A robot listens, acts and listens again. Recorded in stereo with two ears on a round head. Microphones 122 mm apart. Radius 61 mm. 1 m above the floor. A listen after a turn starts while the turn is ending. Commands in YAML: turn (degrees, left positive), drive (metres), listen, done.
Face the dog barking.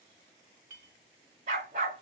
turn: -55
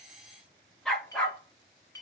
turn: 10
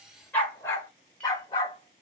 turn: 35
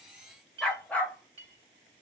turn: 10
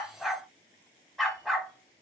done: "Facing the dog barking."